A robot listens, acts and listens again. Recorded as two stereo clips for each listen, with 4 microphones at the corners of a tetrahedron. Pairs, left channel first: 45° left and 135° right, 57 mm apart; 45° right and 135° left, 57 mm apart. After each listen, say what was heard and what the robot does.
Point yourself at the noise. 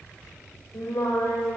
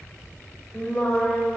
The singing: 20° left. Turn 20° left.
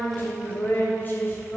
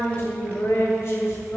Found it: singing, straight ahead, 2 to 4 m away.